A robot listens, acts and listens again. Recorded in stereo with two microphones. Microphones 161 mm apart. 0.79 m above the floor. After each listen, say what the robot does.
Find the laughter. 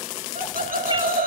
Turn 65° right.
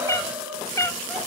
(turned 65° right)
Found it: laughter, straight ahead, 2 to 4 m away.